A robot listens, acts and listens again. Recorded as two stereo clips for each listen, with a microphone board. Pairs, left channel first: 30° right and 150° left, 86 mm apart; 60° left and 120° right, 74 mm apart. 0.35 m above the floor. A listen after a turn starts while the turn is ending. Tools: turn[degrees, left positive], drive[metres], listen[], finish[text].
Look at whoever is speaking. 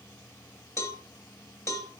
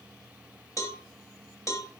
Action: listen[]
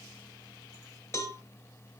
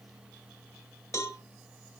Action: listen[]
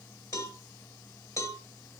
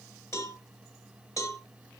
Action: finish[I can't make out anyone speaking to turn to.]